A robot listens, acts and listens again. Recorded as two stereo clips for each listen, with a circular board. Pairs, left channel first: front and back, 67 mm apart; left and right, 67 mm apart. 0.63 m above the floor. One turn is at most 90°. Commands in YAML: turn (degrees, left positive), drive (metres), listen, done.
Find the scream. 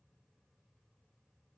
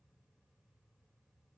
listen: true
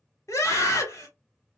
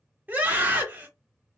turn: -30
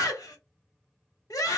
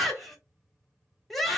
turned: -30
done: "Found it: a scream, straight ahead."